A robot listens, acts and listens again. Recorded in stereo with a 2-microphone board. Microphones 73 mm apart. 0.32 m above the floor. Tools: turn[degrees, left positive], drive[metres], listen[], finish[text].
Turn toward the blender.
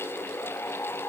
Action: listen[]
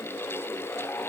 Action: listen[]
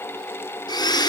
Thought: The blender: about 70° left or 110° left.
Action: turn[70]
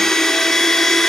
Action: finish[Found it: a blender, straight ahead, 1 to 2 m away.]